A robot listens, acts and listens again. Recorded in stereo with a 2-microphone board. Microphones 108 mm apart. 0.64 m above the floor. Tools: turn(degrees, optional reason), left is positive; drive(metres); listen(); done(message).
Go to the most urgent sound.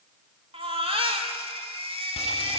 turn(degrees=-60, reason="The baby crying: about 60° right or 120° right.")
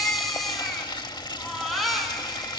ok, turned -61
drive(metres=1.0)
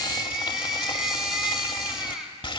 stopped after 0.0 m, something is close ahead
done("Something is in my way. I am facing the baby crying but have not reached it.")